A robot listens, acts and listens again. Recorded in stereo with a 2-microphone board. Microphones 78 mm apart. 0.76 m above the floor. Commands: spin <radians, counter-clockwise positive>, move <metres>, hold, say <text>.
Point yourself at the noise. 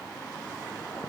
hold
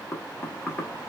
spin 0.52
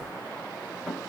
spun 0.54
say Found it: knocking, straight ahead, under 1 m away.